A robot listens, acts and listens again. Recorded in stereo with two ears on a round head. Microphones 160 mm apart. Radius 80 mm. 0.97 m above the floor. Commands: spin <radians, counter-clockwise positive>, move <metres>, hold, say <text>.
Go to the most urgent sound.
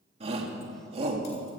spin -0.61
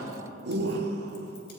spin -1.83
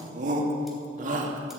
spin -0.79
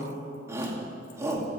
spin -0.26
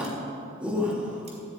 move 1.0
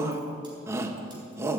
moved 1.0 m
spin -0.35
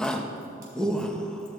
move 1.0
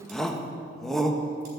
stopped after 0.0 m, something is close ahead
say I am next to the shout.